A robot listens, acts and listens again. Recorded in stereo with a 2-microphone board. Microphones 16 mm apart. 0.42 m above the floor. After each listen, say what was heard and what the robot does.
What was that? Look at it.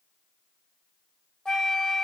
The flute: about 55° left or 125° left. Turn 55° left.
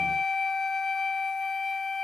Facing the flute, under 1 m away.